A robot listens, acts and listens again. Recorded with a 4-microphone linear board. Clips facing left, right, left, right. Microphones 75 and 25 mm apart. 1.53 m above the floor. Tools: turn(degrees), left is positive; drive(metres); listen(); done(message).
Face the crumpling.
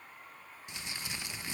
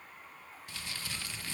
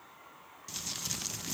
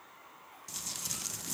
turn(degrees=20)
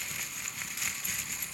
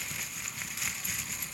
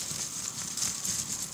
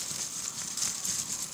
done("Facing the crumpling.")